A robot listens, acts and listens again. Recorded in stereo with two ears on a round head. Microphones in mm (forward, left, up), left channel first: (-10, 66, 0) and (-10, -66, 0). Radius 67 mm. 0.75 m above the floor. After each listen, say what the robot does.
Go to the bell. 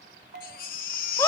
Turn 65° right.
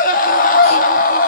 Keep listening.
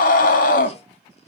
Keep listening.
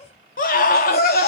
I heard a bell, but can't make it out now. It was about straight ahead or 50° right. I did not reach it.